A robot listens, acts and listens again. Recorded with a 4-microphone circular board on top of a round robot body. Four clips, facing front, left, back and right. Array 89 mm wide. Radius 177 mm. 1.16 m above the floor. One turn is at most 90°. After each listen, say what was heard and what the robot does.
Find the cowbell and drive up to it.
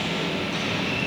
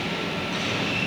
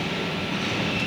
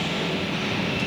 Keep listening.
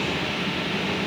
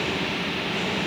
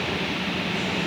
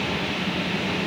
Keep listening.
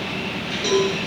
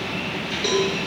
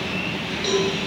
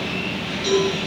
The cowbell: 75° left. Turn 75° left.
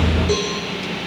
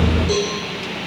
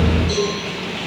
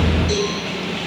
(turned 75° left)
The cowbell is now 35° left. Turn 35° left.
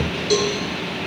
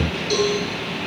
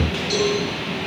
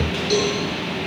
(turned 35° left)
Drive 1.0 m forward.
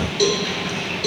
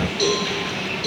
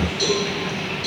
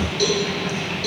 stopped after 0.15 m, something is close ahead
Something is in my way. I am facing the cowbell but have not reached it.